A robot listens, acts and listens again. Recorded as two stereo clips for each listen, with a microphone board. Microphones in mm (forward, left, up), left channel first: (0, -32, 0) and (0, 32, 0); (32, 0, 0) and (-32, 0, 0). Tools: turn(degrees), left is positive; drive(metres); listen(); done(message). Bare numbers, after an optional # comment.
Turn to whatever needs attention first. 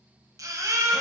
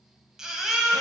# The baby crying: 100° left.
turn(100)
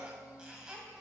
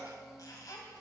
listen()
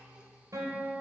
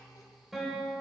listen()
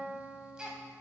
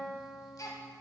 # The baby crying is now 10° left.
turn(10)
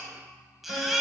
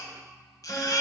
done("Found it: a baby crying, straight ahead, 1 to 2 m away.")